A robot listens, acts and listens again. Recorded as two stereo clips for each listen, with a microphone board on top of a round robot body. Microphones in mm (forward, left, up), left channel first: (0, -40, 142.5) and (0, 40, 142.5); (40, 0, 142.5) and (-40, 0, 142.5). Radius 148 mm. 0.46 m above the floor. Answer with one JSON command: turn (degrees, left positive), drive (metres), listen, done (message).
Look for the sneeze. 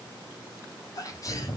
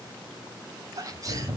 {"turn": -135}
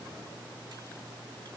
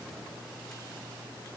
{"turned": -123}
{"turn": -15}
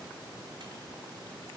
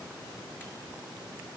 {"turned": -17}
{"done": "I heard a sneeze from this way, but can't make it out now."}